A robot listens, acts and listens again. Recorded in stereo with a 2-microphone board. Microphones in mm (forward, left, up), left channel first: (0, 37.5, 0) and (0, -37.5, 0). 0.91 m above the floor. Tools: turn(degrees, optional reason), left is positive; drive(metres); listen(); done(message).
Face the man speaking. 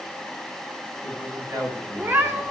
turn(degrees=-40, reason="The man speaking: about 40° right or 140° right.")
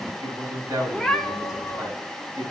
turn(degrees=-115, reason="So it is at 115° right.")
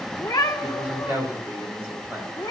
turn(degrees=-20, reason="The man speaking is now 20° right.")
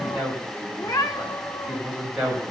done("Facing the man speaking, over 4 m away.")